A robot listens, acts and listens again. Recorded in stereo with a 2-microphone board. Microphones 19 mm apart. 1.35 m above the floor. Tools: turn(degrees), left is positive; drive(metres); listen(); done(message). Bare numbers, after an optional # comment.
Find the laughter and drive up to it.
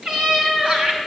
# The laughter: about 50° right or 130° right.
turn(-50)
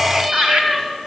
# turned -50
# So it is at 80° right.
turn(-80)
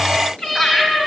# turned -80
# The laughter is now 20° left.
turn(20)
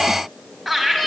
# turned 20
drive(1.0)
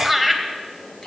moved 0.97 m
drive(1.0)
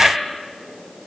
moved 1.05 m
drive(1.0)
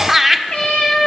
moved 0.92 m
# The laughter is now 15° right.
turn(-15)
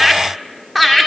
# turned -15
drive(1.0)
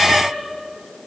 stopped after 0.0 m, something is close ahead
listen()
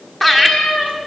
done("Arrived at the laughter, straight ahead.")